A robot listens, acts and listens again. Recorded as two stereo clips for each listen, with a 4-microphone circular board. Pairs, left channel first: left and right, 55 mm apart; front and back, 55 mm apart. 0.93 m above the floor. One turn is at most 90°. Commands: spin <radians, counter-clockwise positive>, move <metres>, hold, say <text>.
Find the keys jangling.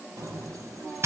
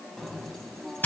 spin -1.48
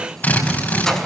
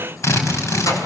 hold
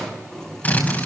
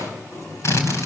spin 0.26
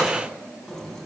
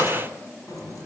say Found it: keys jangling, straight ahead, over 4 m away.